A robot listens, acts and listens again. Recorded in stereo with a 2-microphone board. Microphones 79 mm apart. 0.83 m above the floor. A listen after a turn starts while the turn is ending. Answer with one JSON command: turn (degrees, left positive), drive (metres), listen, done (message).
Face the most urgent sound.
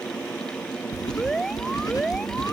{"turn": 30}
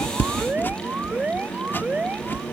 {"turn": -25}
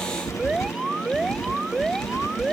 {"turn": -10}
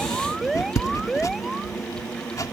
{"done": "Found it: an alarm, straight ahead."}